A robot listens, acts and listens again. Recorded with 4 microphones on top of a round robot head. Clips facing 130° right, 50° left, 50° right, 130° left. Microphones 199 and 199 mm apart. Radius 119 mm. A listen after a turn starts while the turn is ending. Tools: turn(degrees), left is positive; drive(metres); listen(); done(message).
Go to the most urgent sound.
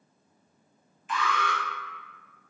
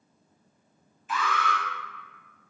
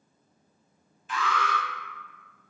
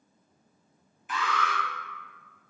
turn(degrees=135)
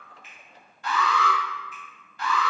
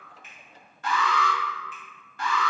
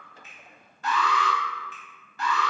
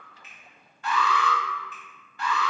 drive(metres=1.0)
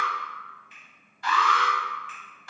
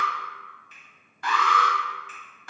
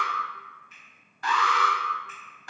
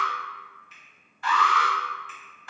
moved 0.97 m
drive(metres=1.0)
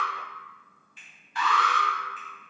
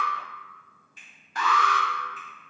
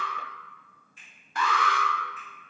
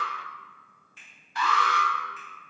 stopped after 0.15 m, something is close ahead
done("Arrived at the alarm, straight ahead.")